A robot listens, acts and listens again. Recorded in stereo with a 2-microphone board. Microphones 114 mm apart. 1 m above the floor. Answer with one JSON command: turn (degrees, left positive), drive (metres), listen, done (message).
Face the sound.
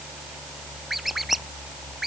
{"turn": 30}
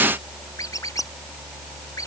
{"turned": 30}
{"turn": 150}
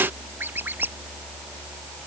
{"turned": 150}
{"turn": -15}
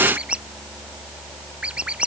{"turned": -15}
{"turn": -10}
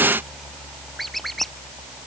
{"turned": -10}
{"done": "Found it: a squeak, straight ahead."}